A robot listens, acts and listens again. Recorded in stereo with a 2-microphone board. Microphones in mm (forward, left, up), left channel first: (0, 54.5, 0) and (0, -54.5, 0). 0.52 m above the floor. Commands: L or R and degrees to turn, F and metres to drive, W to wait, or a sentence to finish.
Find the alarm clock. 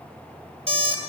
R65
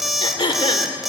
Found it: an alarm clock, straight ahead, 1 to 2 m away.